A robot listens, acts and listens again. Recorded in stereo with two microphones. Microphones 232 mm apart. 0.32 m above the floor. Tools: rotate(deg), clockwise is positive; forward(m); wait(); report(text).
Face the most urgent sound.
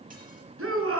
rotate(70)
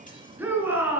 rotate(10)
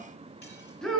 report("Facing the shout, over 4 m away.")